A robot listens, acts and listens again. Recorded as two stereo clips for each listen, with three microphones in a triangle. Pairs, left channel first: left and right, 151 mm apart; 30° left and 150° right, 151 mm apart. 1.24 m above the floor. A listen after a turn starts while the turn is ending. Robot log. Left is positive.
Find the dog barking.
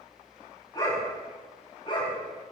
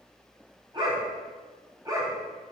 note: The dog barking: 145° left.
cmd yaw +145
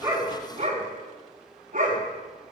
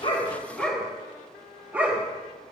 note: The dog barking is now 75° right.
cmd yaw -75
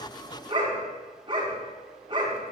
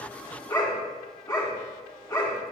note: The dog barking is now 35° right.
cmd yaw -35
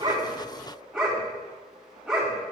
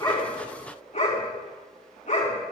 end: Facing the dog barking, 2 to 4 m away.